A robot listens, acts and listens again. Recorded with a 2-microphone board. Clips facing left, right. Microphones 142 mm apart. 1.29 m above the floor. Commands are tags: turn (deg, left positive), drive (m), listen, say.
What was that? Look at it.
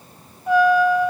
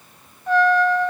<turn deg="30"/>
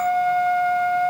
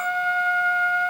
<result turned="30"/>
<turn deg="140"/>
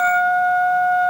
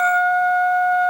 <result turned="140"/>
<say>Found it: a trumpet, straight ahead.</say>